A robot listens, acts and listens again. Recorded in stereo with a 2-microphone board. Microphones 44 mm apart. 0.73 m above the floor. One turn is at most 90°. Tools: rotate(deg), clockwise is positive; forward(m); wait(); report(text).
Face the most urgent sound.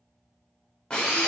wait()
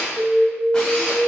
rotate(-30)
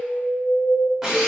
rotate(-90)
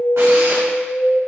rotate(-50)
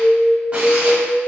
report("Facing the alarm, 1 to 2 m away.")